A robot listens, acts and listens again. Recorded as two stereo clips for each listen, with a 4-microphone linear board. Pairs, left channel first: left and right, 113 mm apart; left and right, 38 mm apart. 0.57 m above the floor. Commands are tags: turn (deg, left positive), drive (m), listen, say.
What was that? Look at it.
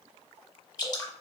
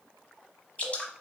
<turn deg="35"/>
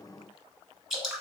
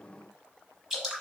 <say>Found it: dripping, straight ahead, under 1 m away.</say>